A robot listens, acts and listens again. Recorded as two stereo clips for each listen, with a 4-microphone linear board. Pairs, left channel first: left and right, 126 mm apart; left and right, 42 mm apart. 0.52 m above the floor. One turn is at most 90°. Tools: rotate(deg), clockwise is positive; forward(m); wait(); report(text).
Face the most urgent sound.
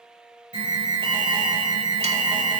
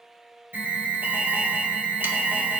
rotate(50)
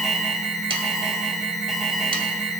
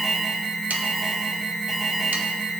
report("Facing the alarm, 2 to 4 m away.")